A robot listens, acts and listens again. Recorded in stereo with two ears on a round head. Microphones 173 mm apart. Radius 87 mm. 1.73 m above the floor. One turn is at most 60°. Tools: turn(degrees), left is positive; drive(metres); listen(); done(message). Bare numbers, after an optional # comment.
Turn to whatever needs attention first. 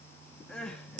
turn(30)
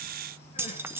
listen()
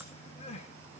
# So it is at 145° left.
turn(60)
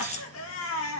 # The crying is now 85° left.
turn(60)
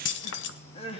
# The crying is now 30° left.
turn(30)
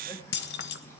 listen()
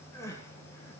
# The crying is now 15° left.
turn(15)
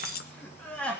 done("Found it: crying, straight ahead.")